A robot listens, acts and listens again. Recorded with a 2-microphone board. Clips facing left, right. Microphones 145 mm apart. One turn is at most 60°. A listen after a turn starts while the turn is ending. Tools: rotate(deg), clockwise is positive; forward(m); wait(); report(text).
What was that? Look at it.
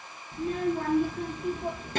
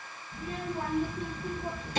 rotate(-55)
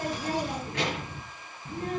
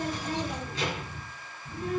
rotate(-60)
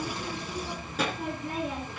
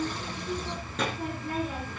report("Found it: a child speaking, straight ahead, 2 to 4 m away.")